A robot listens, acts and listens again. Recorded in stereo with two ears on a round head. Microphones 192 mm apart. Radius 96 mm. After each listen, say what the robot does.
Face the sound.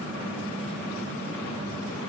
Keep listening.
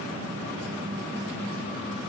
Keep listening.
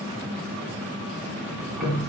Turn 30° left.
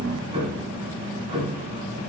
Turn 25° right.
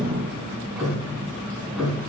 Found it: ticking, straight ahead, 1 to 2 m away.